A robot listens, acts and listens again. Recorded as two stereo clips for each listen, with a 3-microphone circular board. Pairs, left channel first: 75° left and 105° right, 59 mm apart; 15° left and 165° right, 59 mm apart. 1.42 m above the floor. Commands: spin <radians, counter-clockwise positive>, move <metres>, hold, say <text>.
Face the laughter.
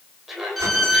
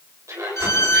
spin 2.97
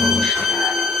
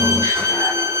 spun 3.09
hold
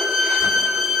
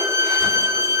hold
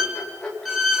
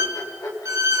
say Found it: laughter, straight ahead, over 4 m away.